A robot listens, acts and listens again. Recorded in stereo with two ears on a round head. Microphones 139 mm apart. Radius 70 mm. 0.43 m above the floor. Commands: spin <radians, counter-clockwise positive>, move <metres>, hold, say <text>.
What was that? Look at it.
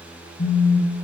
spin 1.13
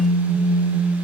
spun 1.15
say Found it: a phone buzzing, straight ahead.